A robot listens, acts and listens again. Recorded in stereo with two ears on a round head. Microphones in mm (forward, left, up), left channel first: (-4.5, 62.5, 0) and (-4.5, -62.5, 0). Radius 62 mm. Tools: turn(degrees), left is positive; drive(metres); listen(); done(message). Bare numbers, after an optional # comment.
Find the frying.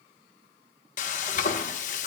# The frying: about 55° left or 125° left.
turn(55)
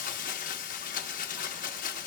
# So it is at 65° left.
turn(65)
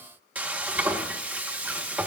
# The frying is now 10° right.
turn(-10)
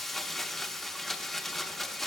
done("Facing the frying.")